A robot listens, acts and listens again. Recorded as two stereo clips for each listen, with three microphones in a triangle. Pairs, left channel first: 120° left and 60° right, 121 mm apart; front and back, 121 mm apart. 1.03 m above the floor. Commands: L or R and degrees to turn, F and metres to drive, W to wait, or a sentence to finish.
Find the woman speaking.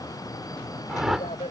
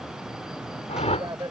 L125
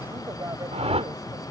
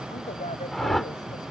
W
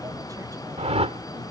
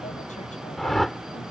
W
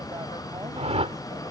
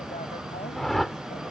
Facing where the woman speaking came from. I can't hear it now.